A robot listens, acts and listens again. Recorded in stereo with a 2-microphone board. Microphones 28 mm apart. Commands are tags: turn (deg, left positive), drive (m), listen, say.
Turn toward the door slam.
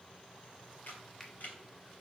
<listen/>
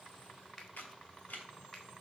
<listen/>
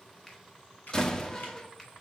<turn deg="20"/>
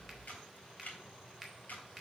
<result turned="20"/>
<listen/>
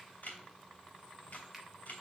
<say>I heard a door slam, but can't make it out now. It was about straight ahead or 140° left.</say>